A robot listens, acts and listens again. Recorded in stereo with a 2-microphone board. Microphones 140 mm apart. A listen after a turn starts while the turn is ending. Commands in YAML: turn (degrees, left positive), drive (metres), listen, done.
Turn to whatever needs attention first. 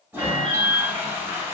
turn: -50
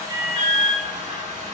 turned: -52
done: "Found it: an alarm, straight ahead."